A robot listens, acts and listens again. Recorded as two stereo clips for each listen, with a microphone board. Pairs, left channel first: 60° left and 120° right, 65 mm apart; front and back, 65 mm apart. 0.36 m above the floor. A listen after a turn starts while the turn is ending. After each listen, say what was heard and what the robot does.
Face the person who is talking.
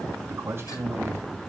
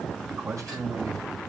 The man speaking: 170° right. Turn 170° right.
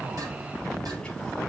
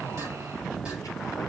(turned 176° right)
Keep listening.
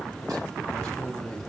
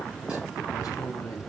The man speaking is now 25° right. Turn 25° right.
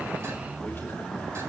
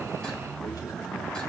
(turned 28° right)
Keep listening.
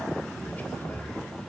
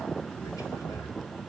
Keep listening.
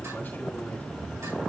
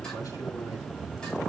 Facing where the man speaking came from. I can't hear it now.